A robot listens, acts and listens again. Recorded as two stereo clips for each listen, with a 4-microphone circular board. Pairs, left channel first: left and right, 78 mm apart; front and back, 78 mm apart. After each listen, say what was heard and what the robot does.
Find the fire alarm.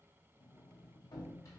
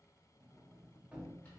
Keep listening.
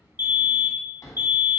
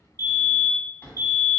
The fire alarm: 35° right. Turn 35° right.
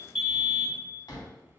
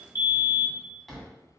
The fire alarm is now 10° right. Turn 10° right.
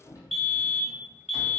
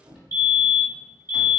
Found it: a fire alarm, straight ahead, 1 to 2 m away.